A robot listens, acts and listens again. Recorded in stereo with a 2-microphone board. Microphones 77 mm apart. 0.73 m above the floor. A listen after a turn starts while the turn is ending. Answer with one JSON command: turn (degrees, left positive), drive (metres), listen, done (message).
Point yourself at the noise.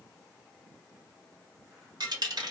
{"turn": -70}
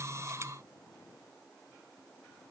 {"listen": true}
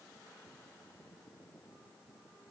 {"done": "I heard a dropped coin, but can't make it out now. It was about straight ahead or 40° right."}